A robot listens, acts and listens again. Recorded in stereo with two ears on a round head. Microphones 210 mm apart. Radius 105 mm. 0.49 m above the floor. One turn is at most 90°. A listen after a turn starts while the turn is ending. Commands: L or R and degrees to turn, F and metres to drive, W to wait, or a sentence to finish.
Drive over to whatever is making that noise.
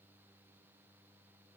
W
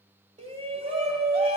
R25
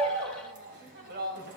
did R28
R90
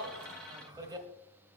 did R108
R20
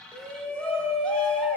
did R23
F1.0
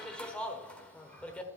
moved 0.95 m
F1.0
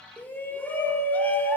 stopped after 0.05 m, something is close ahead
L10
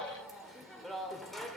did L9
I am next to the shout.